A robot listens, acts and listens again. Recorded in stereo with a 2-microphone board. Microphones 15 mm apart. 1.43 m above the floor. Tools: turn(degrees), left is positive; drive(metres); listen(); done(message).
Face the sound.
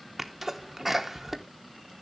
turn(degrees=-30)
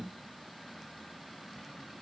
listen()
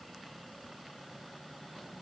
done("I heard a sneeze, but can't make it out now. It was about 15° left or 135° right.")